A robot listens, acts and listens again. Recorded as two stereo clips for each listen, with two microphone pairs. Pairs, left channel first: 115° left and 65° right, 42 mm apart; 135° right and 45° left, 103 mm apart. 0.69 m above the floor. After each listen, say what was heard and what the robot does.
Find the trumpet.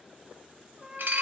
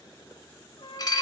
The trumpet: 140° right. Turn 140° right.
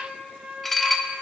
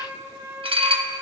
The trumpet is now 15° right. Turn 15° right.
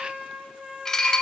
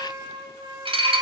Facing the trumpet, 2 to 4 m away.